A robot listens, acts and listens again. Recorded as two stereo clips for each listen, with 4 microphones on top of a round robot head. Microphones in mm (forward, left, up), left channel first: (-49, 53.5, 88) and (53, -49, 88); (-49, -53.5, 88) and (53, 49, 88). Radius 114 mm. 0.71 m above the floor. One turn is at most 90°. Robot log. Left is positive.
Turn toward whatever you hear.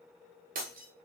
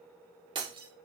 note: The breaking glass: 15° right.
cmd yaw -15
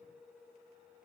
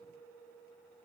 end: I heard breaking glass from this way, but can't make it out now.